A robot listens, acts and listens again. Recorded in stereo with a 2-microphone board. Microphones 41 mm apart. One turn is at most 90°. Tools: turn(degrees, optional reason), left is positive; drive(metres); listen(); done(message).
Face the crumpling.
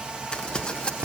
turn(degrees=25, reason="The crumpling: about 25° left or 155° left.")
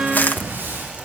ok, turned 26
turn(degrees=90, reason="So it is at 125° left.")
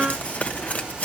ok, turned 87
turn(degrees=40, reason="The crumpling is now 40° left.")
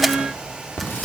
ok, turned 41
done("Facing the crumpling.")